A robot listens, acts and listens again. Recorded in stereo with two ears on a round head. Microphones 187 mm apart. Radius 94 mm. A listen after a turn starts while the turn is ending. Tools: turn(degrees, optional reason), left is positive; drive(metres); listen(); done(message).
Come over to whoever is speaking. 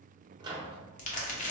listen()
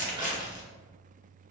listen()
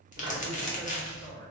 turn(degrees=70, reason="The man speaking: about 70° left or 110° left.")
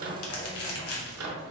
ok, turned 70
listen()
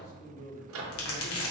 turn(degrees=40, reason="So it is at 40° left.")
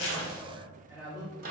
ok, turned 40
drive(metres=1.0)
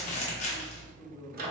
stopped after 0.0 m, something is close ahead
done("Something is in my way. I am facing the man speaking but have not reached it.")